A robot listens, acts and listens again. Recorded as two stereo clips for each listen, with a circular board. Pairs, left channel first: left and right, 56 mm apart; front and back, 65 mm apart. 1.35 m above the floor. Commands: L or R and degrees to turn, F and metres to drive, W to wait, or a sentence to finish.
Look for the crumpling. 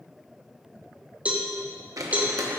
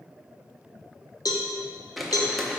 R90
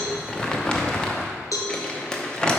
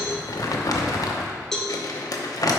L15
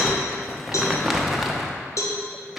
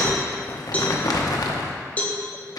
Facing the crumpling, under 1 m away.